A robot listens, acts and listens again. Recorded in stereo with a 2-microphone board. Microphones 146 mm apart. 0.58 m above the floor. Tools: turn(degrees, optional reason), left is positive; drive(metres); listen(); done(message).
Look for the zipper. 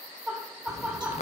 turn(degrees=50, reason="The zipper: about 50° left or 130° left.")
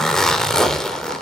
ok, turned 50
done("Found it: a zipper, straight ahead.")